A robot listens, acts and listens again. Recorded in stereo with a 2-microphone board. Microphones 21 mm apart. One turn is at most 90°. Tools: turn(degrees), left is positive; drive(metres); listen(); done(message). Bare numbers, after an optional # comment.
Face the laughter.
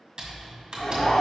# The laughter: about 50° left or 130° left.
turn(50)
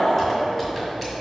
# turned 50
# So it is at 65° left.
turn(65)
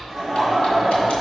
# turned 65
done("Found it: laughter, straight ahead, 2 to 4 m away.")